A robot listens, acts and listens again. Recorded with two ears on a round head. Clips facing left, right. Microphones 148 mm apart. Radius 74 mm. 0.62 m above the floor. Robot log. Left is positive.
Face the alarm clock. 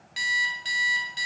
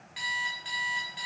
note: The alarm clock: about 50° left or 130° left.
cmd yaw +50
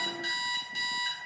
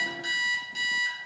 end: Found it: an alarm clock, straight ahead, 1 to 2 m away.